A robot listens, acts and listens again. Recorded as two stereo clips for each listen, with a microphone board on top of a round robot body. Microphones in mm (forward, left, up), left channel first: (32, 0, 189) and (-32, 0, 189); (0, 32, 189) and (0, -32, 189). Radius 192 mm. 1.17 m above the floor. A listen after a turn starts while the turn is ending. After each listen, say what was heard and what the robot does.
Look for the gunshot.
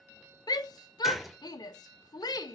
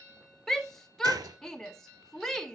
The gunshot: 90° right. Turn 90° right.
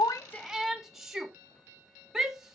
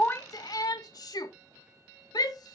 I heard a gunshot from this way, but can't make it out now.